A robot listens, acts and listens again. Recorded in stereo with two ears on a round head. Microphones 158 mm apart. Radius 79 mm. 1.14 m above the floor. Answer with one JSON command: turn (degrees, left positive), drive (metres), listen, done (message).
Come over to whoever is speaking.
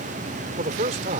{"turn": -45}
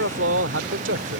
{"turn": -90}
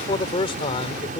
{"turn": 35}
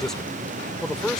{"drive": 1.0}
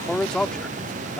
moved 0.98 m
{"drive": 1.0}
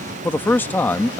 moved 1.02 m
{"turn": 10}
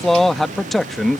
{"drive": 1.0}
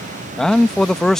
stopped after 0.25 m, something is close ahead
{"done": "Arrived at the man speaking, straight ahead."}